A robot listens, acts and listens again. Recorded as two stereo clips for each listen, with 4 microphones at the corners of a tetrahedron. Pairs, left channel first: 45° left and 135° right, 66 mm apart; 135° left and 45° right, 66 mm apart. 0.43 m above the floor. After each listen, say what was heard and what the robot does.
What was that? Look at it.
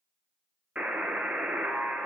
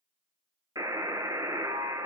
The buzzer: 65° right. Turn 65° right.
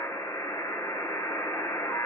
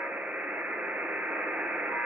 The buzzer is now 25° left. Turn 25° left.
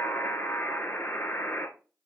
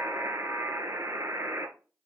Facing the buzzer, 1 to 2 m away.